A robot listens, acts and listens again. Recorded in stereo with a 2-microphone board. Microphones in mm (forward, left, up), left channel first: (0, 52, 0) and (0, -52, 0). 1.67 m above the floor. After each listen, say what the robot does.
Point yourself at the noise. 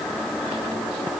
Keep listening.
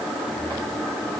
Keep listening.
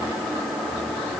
I can't make out anything to turn to.